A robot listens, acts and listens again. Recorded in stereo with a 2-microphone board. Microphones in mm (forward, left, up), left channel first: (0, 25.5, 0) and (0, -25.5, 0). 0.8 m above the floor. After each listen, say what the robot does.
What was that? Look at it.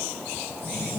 Turn 20° left.
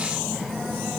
Facing the phone buzzing, 2 to 4 m away.